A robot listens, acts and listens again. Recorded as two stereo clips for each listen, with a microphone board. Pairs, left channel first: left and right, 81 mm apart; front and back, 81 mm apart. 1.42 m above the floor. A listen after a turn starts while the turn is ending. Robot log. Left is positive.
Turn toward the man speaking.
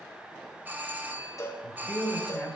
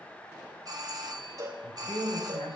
note: The man speaking: 10° left.
cmd yaw +10
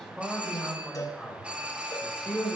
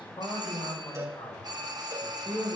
note: The man speaking is now 10° right.
cmd yaw -10
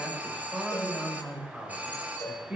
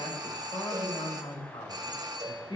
note: The man speaking is now 10° right.
cmd yaw -10
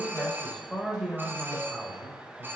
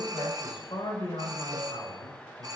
end: Found it: a man speaking, straight ahead, over 4 m away.